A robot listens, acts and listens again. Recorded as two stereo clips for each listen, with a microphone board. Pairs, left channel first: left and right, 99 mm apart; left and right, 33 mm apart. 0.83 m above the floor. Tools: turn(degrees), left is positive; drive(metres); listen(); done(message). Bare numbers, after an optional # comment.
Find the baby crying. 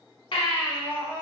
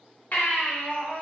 # The baby crying: about 55° left or 125° left.
turn(55)
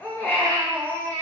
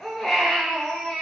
# So it is at 20° left.
turn(20)
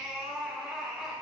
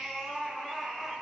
done("Found it: a baby crying, straight ahead.")